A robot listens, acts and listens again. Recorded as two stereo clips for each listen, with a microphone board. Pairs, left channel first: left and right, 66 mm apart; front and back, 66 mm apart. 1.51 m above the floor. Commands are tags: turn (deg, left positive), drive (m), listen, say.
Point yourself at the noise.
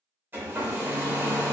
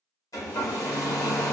<turn deg="-30"/>
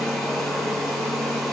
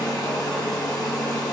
<say>Found it: a hair dryer, straight ahead.</say>